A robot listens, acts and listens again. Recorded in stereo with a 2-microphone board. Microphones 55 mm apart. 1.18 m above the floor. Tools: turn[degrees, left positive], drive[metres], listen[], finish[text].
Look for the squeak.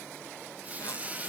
Thought: The squeak: about 30° right or 150° right.
Action: turn[-30]
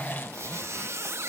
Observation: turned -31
Thought: So it is at 115° right.
Action: turn[-115]
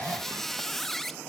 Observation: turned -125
Thought: The squeak is now 10° left.
Action: turn[10]
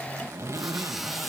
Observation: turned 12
Action: finish[Found it: a squeak, straight ahead.]